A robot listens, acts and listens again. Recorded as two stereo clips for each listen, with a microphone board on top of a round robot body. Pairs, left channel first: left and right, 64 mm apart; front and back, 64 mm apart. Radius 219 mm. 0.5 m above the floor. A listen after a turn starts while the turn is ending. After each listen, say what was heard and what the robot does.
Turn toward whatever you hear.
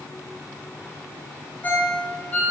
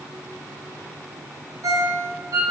The ringtone: 155° left. Turn 155° left.
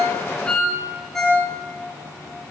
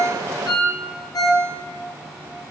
Found it: a ringtone, straight ahead.